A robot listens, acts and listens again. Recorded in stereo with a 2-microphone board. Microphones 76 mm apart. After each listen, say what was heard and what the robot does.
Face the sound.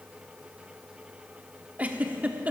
The giggle: about 20° right or 160° right. Turn 20° right.
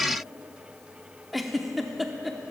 Facing the giggle, under 1 m away.